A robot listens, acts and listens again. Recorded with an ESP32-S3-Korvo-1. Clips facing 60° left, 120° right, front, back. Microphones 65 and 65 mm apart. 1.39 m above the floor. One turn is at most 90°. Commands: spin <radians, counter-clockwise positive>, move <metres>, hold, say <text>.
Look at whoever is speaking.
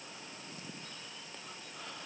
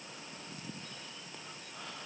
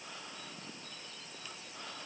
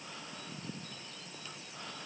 hold
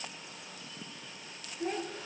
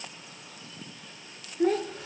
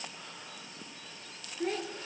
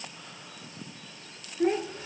spin -1.57
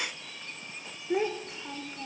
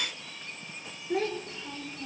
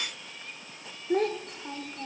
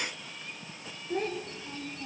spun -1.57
spin -0.17
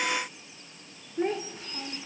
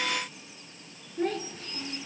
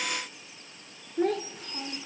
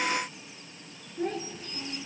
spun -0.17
say Facing the child speaking.